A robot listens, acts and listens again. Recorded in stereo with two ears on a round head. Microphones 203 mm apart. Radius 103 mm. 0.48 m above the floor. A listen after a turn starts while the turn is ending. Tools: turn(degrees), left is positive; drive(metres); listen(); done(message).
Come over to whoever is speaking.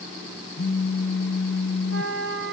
listen()
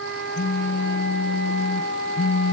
listen()
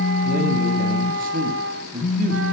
turn(degrees=-40)
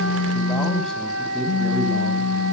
drive(metres=1.0)
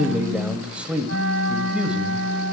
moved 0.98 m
drive(metres=1.0)
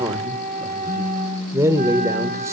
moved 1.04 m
turn(degrees=-15)
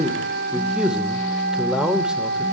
drive(metres=1.0)
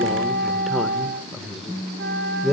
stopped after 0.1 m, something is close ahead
done("I am next to the man speaking.")